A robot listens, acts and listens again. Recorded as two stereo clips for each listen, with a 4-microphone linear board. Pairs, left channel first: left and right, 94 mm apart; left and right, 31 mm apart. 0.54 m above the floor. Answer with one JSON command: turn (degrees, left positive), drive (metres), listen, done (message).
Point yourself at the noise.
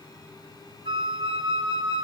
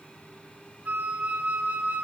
{"turn": -70}
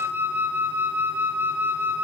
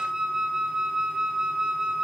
{"turn": -20}
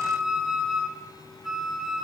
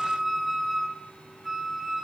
{"done": "Found it: a flute, straight ahead."}